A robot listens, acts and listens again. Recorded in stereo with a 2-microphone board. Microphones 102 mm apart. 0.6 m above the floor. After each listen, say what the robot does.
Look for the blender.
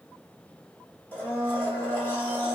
Turn 20° left.
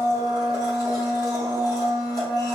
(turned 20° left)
Turn 140° left.
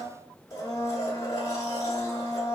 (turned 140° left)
Turn 35° left.
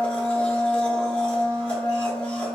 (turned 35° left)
Turn 10° left.
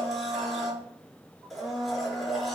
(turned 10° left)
Facing the blender, under 1 m away.